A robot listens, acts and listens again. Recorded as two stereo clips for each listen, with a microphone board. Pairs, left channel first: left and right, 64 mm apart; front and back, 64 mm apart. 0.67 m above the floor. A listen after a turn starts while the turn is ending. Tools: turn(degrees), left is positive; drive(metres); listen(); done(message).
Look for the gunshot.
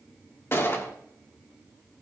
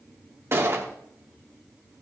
turn(degrees=135)
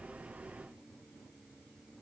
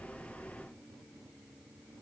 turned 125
turn(degrees=10)
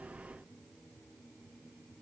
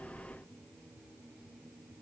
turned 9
done("Facing where the gunshot came from. I can't hear it now.")